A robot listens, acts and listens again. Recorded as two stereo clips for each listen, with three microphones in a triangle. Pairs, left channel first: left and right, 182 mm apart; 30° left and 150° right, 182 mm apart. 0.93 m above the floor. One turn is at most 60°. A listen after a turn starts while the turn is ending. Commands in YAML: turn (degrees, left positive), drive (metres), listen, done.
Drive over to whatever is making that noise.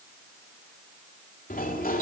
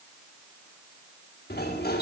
turn: 55
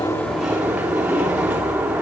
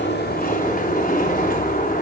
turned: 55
drive: 1.0
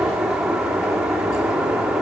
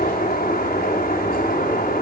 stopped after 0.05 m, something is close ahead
done: "Blocked. The sliding door is further on, straight ahead."